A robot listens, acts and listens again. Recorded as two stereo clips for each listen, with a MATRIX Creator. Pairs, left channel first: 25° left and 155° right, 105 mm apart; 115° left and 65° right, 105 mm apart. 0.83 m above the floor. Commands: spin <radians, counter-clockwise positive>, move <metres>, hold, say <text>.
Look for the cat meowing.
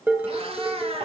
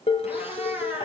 spin -2.44
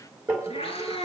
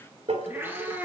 say Found it: a cat meowing, straight ahead.